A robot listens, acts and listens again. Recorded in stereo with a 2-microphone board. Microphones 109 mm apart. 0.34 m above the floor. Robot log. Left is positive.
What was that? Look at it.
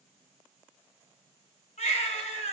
note: The baby crying: about 75° left or 105° left.
cmd yaw +75
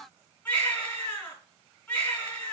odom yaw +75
note: So it is at 15° left.
cmd yaw +15
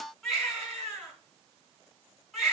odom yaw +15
end: Found it: a baby crying, straight ahead.